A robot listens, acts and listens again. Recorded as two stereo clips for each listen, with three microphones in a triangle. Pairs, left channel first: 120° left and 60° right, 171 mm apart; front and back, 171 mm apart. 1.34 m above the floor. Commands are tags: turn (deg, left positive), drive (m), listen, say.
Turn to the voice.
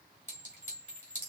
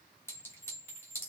<listen/>
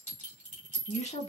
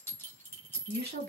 <turn deg="170"/>
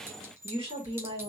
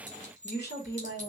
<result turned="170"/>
<say>Found it: a woman speaking, straight ahead, 2 to 4 m away.</say>